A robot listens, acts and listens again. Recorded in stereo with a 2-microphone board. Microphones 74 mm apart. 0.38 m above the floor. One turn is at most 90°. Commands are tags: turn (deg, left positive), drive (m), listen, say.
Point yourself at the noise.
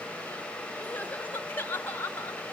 <turn deg="25"/>
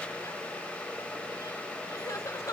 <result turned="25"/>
<turn deg="90"/>
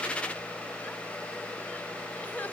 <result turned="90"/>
<turn deg="25"/>
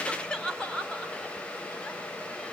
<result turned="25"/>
<turn deg="15"/>
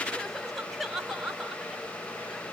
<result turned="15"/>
<say>Found it: crying, straight ahead, 1 to 2 m away.</say>